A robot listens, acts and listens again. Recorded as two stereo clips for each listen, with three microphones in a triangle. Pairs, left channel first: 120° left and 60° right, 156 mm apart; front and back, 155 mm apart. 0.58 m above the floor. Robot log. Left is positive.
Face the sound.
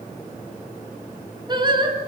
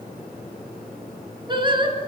note: The singing: 120° right.
cmd yaw -120
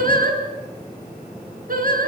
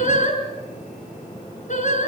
note: The singing is now 35° right.
cmd yaw -35
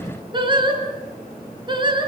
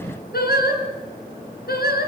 end: Found it: singing, straight ahead.